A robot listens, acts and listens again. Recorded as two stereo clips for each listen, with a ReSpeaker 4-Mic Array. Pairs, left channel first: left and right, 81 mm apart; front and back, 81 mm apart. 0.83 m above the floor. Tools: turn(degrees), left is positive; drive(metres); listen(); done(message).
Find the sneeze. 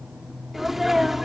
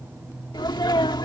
done("Found it: a sneeze, straight ahead.")